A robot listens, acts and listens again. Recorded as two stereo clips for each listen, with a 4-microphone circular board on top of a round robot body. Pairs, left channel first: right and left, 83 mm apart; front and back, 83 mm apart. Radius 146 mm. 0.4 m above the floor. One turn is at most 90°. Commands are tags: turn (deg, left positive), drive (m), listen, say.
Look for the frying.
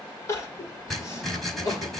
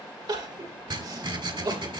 <listen/>
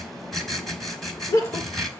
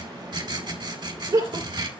<listen/>
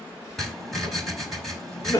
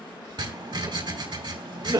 <say>I can't make out frying to turn to.</say>